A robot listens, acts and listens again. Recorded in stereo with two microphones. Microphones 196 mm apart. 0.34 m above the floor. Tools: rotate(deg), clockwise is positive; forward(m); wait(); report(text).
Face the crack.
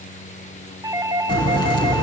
rotate(-25)
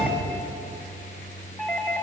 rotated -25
wait()
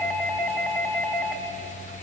report("I heard a crack, but can't make it out now. It was about straight ahead or 130° left.")